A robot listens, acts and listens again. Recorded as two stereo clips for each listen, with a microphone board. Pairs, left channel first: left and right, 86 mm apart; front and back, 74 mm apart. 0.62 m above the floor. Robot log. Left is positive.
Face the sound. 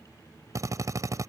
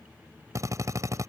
note: The drill: 140° right.
cmd yaw -140
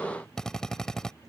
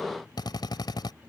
end: Found it: a drill, straight ahead.